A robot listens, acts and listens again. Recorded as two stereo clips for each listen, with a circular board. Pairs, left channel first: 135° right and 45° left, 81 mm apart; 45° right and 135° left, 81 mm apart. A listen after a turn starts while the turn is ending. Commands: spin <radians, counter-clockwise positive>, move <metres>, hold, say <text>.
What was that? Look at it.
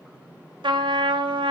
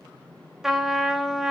spin 0.87
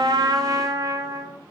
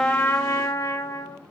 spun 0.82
say Found it: a trumpet, straight ahead.